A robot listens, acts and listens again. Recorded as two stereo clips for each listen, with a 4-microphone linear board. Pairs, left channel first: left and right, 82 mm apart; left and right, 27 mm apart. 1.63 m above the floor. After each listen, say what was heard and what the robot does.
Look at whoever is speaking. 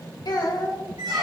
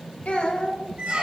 The child speaking: about 60° left or 120° left. Turn 60° left.
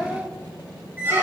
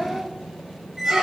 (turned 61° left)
So it is at 10° left. Turn 10° left.
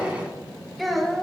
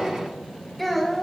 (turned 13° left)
Found it: a child speaking, straight ahead, 1 to 2 m away.